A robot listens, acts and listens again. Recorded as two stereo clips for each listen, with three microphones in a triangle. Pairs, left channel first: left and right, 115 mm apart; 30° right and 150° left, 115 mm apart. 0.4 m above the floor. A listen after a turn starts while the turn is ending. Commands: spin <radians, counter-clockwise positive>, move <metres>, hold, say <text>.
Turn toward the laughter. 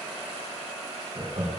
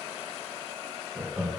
spin -2.09
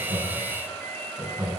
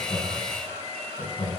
spin -0.26
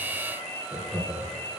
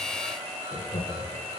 say Facing the laughter, over 4 m away.